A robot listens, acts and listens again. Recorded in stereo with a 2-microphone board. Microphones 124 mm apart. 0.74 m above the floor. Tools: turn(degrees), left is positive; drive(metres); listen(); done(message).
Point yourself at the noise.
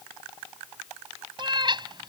turn(degrees=-40)
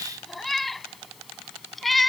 done("Found it: a cat meowing, straight ahead.")